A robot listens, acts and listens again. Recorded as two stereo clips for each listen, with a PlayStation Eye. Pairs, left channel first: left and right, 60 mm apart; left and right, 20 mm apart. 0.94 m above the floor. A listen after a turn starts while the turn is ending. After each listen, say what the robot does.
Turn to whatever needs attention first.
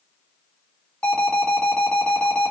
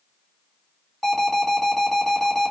Turn 25° left.
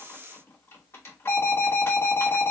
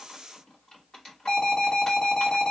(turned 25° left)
Turn 125° left.
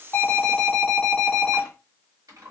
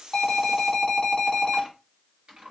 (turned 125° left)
Facing the alarm.